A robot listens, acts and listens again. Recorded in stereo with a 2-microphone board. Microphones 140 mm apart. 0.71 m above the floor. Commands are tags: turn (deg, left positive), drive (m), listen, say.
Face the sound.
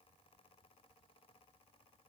<listen/>
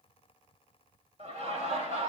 <turn deg="-50"/>
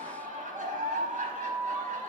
<turn deg="-75"/>
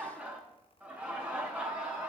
<turn deg="-10"/>
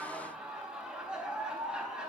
<say>Facing the laughter, over 4 m away.</say>